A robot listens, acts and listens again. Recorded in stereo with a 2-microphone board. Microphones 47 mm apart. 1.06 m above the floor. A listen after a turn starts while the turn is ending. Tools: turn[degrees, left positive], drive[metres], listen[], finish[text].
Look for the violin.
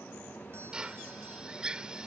Action: listen[]
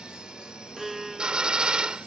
Action: turn[-30]
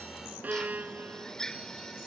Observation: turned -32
Thought: So it is at 145° right.
Action: turn[-145]
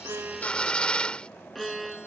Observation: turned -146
Action: finish[Found it: a violin, straight ahead.]